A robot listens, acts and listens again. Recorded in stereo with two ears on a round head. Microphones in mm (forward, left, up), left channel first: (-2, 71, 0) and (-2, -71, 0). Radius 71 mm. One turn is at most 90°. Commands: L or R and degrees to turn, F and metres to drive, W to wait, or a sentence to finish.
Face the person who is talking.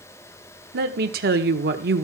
R65
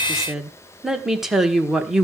Facing the woman speaking.